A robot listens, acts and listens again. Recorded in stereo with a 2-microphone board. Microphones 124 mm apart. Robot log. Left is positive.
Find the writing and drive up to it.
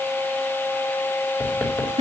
cmd yaw +30
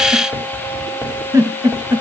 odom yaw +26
note: So it is at 15° right.
cmd yaw -15
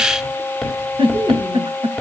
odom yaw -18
cmd fwd 1.0
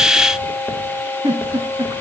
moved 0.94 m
cmd idle
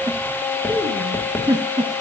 note: The writing is now 10° left.
cmd yaw +10
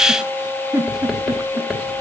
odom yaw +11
cmd fwd 1.0
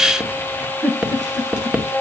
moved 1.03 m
note: The writing is now 10° right.
cmd yaw -10
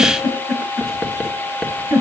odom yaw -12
cmd fwd 1.0
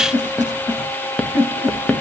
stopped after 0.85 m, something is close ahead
note: The writing is now 10° left.
cmd yaw +10
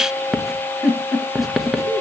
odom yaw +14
end: Arrived at the writing, straight ahead.